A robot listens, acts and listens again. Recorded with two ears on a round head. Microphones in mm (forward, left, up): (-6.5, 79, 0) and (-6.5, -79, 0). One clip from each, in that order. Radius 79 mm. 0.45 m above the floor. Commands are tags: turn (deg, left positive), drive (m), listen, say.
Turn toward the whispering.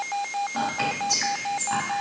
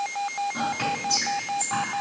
<turn deg="55"/>
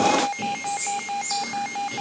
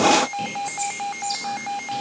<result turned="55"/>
<listen/>
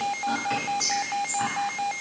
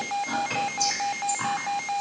<say>Facing the whispering.</say>